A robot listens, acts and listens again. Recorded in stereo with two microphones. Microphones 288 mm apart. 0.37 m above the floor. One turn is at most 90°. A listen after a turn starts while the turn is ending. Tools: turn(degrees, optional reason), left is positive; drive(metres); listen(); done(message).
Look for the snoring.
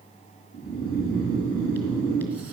turn(degrees=55, reason="The snoring: about 55° left or 125° left.")
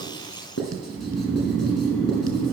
done("Facing the snoring, 2 to 4 m away.")